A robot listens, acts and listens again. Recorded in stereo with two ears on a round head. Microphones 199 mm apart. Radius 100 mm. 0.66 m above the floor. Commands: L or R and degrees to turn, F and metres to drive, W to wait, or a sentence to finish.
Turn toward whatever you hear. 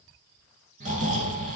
R35
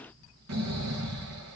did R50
R95
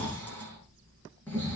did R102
L10
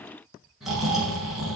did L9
Found it: snoring, straight ahead.